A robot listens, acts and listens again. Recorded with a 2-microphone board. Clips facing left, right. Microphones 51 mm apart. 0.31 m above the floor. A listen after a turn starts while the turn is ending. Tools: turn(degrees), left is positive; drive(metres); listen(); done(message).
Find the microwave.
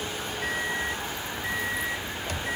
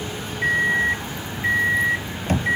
turn(degrees=-45)
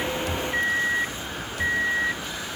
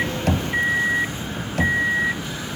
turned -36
turn(degrees=-15)
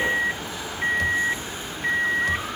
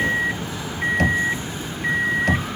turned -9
done("Found it: a microwave, straight ahead.")